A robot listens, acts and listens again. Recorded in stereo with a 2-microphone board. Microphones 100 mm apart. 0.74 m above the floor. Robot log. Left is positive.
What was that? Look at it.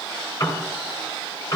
note: The piano: about 25° left or 155° left.
cmd yaw +25
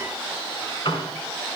note: So it is at 130° left.
cmd yaw +130
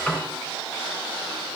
note: The piano is now 20° left.
cmd yaw +20
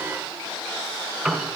end: Found it: a piano, straight ahead, 2 to 4 m away.